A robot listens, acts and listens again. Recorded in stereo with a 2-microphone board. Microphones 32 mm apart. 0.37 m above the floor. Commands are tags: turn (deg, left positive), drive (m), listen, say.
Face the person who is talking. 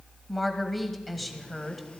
<turn deg="30"/>
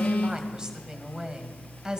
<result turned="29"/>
<turn deg="-30"/>
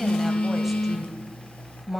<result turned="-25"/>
<say>Facing the woman speaking.</say>